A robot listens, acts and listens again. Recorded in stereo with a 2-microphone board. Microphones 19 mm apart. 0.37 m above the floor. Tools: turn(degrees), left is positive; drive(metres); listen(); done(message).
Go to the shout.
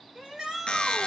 turn(degrees=-35)
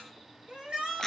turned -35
turn(degrees=-110)
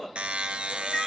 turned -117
turn(degrees=10)
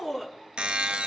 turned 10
drive(metres=1.0)
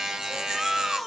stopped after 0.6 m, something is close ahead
turn(degrees=-10)
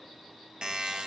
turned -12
listen()
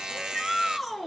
done("Blocked. The shout is further on, straight ahead.")